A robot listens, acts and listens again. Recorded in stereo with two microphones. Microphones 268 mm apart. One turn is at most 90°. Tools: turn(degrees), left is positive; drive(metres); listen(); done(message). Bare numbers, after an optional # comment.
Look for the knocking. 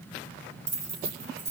listen()
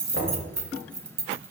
# The knocking: about 50° left or 130° left.
turn(50)
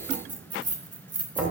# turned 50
done("Found it: knocking, straight ahead, 2 to 4 m away.")